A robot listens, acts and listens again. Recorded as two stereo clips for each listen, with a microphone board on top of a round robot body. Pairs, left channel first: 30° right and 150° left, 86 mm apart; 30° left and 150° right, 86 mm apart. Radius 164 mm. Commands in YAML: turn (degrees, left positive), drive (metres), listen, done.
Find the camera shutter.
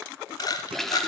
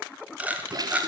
turn: -75
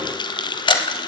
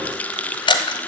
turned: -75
done: "Facing the camera shutter, 1 to 2 m away."